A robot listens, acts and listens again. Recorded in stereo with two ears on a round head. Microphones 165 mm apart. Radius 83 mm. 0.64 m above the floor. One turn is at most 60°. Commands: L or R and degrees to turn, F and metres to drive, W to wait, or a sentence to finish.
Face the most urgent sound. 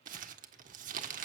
W
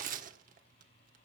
W
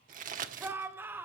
R30
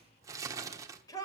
L20
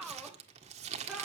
Found it: a shout, straight ahead, 2 to 4 m away.